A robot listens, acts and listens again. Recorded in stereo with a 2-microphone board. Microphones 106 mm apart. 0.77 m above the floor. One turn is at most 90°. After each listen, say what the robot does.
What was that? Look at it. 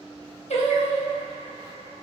Turn 90° left.
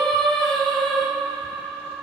Found it: singing, straight ahead, under 1 m away.